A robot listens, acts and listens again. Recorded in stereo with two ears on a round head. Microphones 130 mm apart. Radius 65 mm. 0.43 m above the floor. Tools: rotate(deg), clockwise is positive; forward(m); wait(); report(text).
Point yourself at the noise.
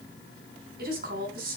rotate(70)
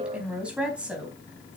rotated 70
rotate(10)
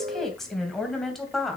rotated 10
report("Facing the woman speaking, 2 to 4 m away.")